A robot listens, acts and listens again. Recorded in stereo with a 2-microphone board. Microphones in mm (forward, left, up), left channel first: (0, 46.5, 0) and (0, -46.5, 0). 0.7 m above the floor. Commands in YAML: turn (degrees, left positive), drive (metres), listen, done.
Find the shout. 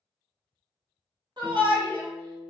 turn: -55
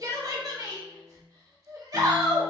turn: -50
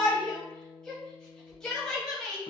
turn: 10
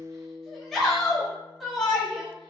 done: "Facing the shout, 1 to 2 m away."